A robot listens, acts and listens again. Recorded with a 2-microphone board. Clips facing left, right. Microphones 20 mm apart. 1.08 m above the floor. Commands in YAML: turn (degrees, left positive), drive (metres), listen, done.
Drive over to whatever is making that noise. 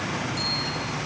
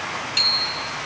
turn: -90
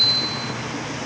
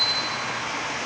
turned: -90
turn: 15
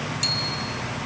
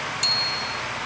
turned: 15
drive: 1.0
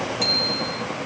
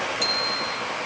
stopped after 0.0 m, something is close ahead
done: "Blocked. The bicycle bell is further on, straight ahead."